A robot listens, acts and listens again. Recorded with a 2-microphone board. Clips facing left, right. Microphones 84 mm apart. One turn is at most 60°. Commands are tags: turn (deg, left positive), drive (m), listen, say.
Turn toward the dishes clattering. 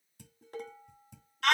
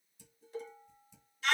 <turn deg="60"/>
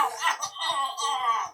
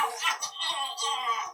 <listen/>
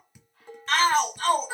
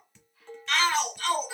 <turn deg="15"/>
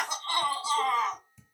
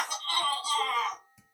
<say>Facing the dishes clattering.</say>